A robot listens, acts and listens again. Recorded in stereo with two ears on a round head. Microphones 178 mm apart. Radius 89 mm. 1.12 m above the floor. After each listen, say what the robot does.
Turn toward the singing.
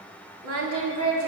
Turn 90° right.
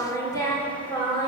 Turn 25° left.
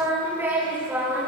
Found it: singing, straight ahead, over 4 m away.